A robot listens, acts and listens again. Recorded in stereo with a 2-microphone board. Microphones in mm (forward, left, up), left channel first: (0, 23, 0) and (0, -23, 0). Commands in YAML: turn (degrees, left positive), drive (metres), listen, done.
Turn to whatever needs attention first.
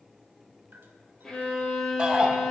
turn: -20
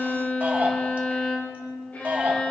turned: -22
turn: -135
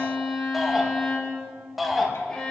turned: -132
done: "Found it: a shout, straight ahead."